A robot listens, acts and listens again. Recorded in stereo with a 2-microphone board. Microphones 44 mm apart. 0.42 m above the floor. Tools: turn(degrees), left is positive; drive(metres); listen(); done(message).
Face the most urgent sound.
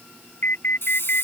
turn(degrees=50)
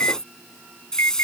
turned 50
turn(degrees=75)
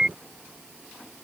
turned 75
turn(degrees=-20)
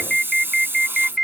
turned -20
done("Facing the alarm.")